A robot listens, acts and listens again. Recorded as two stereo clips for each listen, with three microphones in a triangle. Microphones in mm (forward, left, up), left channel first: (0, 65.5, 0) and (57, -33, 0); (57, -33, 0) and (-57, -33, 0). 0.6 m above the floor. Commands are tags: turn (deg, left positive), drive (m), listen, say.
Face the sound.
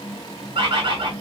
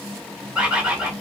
<turn deg="-100"/>
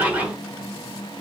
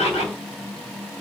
<turn deg="15"/>
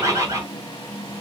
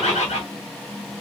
<say>Facing the bird.</say>